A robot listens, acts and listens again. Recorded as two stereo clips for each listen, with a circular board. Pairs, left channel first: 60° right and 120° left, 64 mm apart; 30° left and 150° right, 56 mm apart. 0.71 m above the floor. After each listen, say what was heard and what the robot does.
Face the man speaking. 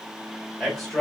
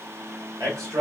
The man speaking: 140° right. Turn 140° right.
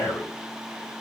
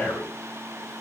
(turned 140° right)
The man speaking is now 40° right. Turn 40° right.
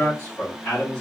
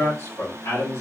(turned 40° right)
Facing the man speaking.